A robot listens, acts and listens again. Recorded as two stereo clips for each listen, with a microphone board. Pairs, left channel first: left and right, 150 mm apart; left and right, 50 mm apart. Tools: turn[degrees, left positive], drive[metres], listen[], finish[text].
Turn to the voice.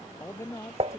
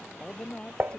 Thought: The man speaking: about 20° left or 160° left.
Action: turn[20]
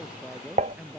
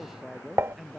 Action: finish[Facing the man speaking.]